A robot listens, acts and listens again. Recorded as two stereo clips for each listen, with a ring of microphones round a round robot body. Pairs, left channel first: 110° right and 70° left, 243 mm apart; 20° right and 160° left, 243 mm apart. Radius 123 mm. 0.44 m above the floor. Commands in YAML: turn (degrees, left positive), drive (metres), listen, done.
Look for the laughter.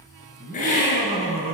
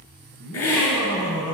done: "Found it: laughter, straight ahead."